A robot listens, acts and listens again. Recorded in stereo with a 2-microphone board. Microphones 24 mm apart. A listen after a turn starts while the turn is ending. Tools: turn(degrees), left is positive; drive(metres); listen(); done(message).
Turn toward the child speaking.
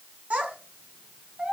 turn(degrees=-70)
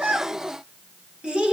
turn(degrees=-40)
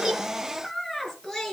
turn(degrees=10)
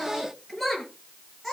done("Facing the child speaking.")